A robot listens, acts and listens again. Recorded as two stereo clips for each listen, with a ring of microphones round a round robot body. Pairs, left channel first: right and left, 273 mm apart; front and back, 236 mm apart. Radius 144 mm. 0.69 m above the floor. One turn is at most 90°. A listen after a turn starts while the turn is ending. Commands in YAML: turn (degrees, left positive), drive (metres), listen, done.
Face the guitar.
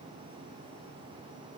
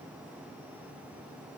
listen: true
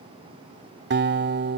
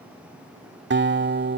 turn: 90
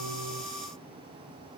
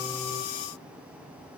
turn: 50
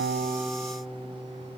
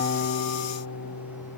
done: "Facing the guitar."